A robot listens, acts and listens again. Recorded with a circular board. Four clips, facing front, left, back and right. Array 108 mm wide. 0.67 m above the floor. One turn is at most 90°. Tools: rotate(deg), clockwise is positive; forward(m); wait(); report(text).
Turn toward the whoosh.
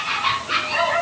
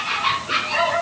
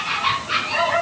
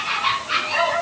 wait()
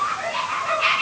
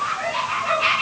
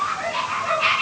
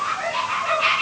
wait()
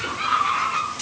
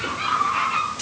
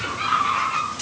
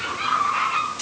report("I can't make out a whoosh to turn to.")